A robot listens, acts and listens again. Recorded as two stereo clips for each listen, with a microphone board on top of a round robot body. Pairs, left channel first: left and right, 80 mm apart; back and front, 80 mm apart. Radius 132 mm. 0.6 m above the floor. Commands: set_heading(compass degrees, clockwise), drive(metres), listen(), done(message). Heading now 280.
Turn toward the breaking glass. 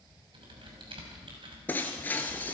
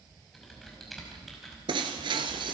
set_heading(260)
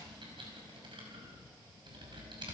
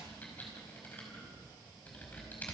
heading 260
done("Facing where the breaking glass came from. I can't hear it now.")